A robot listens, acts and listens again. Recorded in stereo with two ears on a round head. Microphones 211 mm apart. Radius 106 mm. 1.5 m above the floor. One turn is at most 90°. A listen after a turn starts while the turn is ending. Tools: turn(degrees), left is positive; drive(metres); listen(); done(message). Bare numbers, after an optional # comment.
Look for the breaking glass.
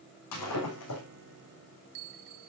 turn(90)
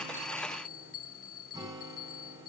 done("I heard breaking glass from this way, but can't make it out now.")